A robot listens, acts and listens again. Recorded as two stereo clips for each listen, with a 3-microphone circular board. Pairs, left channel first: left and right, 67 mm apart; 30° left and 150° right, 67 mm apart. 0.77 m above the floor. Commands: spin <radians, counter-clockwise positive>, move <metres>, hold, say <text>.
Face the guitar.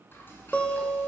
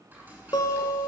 spin 0.26
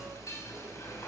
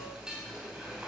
hold
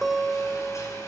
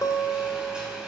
say Found it: a guitar, straight ahead, 1 to 2 m away.